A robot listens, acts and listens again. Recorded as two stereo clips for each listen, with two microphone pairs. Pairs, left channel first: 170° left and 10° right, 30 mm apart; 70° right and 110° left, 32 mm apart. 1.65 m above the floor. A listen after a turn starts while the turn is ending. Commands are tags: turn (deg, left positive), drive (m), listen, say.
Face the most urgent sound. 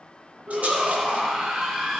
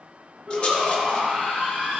<turn deg="55"/>
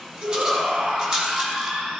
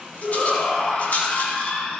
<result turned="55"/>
<say>Facing the shout, 2 to 4 m away.</say>